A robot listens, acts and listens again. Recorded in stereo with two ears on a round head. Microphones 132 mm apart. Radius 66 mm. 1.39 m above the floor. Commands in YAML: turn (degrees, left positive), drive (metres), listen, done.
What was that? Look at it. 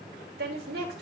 turn: -90
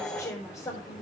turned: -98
turn: 20
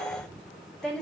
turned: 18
done: "Found it: a woman speaking, straight ahead."